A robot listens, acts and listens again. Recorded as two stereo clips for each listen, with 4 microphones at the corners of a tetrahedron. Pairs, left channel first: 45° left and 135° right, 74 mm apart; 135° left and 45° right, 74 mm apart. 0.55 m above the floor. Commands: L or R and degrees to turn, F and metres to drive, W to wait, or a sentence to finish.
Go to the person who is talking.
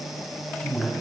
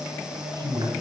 R20
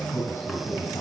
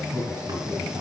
F1.0
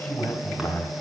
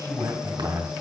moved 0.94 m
R10
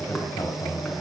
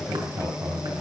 F1.0
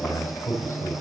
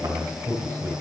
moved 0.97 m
F1.0
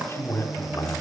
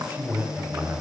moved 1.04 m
F1.0
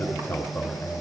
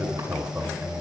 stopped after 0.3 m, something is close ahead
Arrived at the man speaking, straight ahead.